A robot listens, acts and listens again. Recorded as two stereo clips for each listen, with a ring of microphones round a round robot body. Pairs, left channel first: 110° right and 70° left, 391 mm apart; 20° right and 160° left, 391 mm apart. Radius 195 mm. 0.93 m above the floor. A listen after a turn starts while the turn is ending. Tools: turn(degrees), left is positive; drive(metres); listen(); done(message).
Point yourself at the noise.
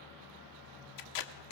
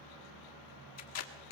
turn(degrees=-75)
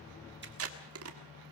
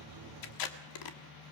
turn(degrees=15)
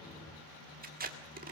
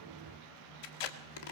done("Found it: tape being pulled, straight ahead, 1 to 2 m away.")